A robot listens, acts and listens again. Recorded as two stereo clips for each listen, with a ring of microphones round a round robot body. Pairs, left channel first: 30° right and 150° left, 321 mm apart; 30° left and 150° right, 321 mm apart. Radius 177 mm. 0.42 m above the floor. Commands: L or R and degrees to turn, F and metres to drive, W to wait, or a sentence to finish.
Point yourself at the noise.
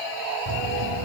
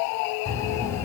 L110
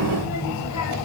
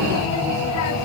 Facing the child speaking, 2 to 4 m away.